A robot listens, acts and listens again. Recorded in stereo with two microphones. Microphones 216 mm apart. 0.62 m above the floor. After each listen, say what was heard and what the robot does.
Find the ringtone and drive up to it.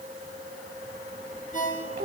The ringtone: about 35° left or 145° left. Turn 35° left.
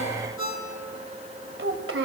So it is at 105° left. Turn 105° left.
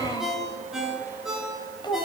Drive 1.0 m forward.
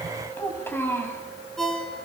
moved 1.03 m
Drive 1.0 m forward.
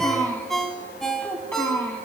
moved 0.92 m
Drive 1.0 m forward.
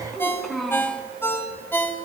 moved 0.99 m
The ringtone is now 10° left. Turn 10° left.
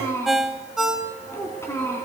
Drive 1.0 m forward.
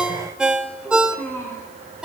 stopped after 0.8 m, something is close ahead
I am next to the ringtone.